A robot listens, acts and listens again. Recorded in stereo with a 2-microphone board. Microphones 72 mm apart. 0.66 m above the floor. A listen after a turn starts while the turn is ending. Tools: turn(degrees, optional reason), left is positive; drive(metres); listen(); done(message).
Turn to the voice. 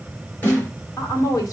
turn(degrees=55, reason="The woman speaking: about 55° left or 125° left.")
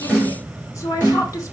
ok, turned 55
turn(degrees=55, reason="So it is at 55° left.")
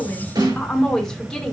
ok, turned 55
turn(degrees=10, reason="The woman speaking is now 10° left.")
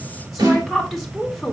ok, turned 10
done("Found it: a woman speaking, straight ahead.")